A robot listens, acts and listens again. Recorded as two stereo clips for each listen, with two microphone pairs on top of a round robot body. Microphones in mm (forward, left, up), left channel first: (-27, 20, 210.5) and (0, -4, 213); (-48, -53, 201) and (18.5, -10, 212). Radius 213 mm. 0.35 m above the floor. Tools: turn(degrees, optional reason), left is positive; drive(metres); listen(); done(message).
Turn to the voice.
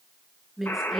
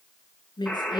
turn(degrees=-125, reason="The woman speaking: 125° right.")
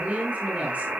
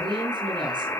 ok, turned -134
done("Facing the woman speaking.")